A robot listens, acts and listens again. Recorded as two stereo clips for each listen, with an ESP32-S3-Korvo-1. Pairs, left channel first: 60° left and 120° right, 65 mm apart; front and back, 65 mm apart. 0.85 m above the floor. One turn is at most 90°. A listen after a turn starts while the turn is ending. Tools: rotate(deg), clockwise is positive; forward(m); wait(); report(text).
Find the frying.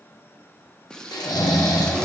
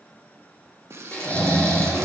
rotate(-90)
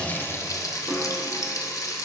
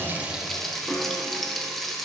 rotate(-85)
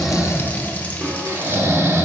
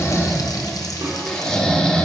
wait()
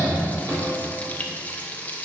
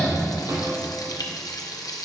report("Found it: frying, straight ahead, under 1 m away.")